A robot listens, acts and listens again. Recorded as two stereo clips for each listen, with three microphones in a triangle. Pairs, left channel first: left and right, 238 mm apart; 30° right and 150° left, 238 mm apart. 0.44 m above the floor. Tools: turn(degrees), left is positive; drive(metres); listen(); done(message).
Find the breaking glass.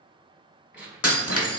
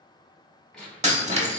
turn(degrees=90)
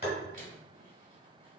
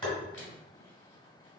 done("Facing where the breaking glass came from. I can't hear it now.")